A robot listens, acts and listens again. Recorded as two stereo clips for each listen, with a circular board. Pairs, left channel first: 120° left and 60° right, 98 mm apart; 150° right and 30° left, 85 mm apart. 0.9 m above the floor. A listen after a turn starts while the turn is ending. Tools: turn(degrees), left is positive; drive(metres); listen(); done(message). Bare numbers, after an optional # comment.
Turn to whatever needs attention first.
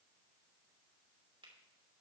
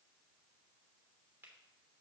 listen()
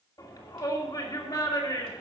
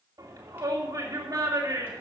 # The shout: 75° left.
turn(75)
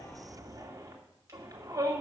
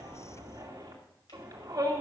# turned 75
done("Facing the shout, 2 to 4 m away.")